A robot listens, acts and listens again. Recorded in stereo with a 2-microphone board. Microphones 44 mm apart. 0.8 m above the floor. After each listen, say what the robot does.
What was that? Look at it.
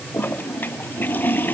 Turn 50° left.
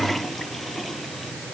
Keep listening.
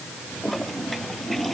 Found it: a toilet flushing, straight ahead.